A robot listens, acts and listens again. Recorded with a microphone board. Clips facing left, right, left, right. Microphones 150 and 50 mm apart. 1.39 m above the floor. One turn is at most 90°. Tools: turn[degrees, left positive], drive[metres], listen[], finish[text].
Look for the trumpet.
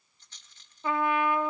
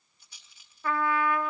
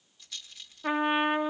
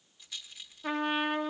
Thought: The trumpet: about 20° left or 160° left.
Action: turn[20]
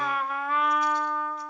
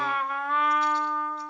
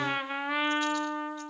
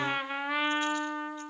Action: finish[Facing the trumpet, 1 to 2 m away.]